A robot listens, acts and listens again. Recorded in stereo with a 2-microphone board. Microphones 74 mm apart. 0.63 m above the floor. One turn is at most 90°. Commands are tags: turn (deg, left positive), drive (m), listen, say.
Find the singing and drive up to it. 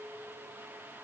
<listen/>
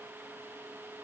<listen/>
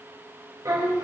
<turn deg="-50"/>
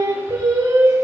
<turn deg="-80"/>
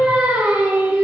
<turn deg="-30"/>
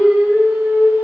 <drive m="1.0"/>
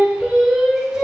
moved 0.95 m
<drive m="1.0"/>
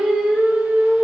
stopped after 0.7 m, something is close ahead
<turn deg="-10"/>
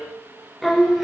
<say>Arrived at the singing, straight ahead.</say>